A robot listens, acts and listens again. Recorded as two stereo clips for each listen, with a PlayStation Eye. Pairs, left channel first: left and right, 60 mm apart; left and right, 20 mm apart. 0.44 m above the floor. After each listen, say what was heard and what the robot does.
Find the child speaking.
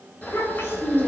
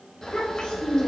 The child speaking: about 45° left or 135° left. Turn 45° left.
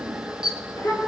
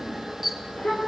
So it is at 100° left. Turn 100° left.
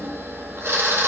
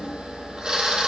Keep listening.
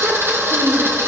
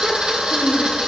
The child speaking is now 50° right. Turn 50° right.
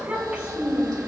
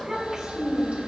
The child speaking is now 20° right. Turn 20° right.
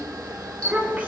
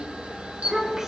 The child speaking is now 15° right. Turn 15° right.
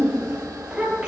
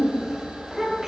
Found it: a child speaking, straight ahead, over 4 m away.